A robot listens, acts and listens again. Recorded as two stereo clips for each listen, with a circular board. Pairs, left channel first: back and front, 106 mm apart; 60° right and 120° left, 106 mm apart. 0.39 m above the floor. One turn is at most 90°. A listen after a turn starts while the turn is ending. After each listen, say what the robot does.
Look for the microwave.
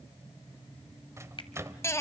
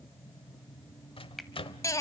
Turn 60° right.
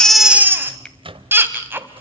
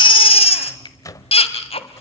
Turn 10° right.
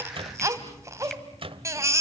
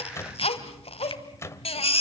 Facing the microwave, 1 to 2 m away.